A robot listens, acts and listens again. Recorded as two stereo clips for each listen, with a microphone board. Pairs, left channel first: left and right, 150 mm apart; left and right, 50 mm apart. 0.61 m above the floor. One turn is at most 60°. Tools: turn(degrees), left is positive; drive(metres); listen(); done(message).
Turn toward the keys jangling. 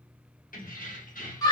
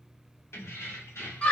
turn(degrees=60)
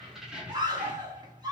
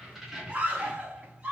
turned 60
done("Facing the keys jangling, 1 to 2 m away.")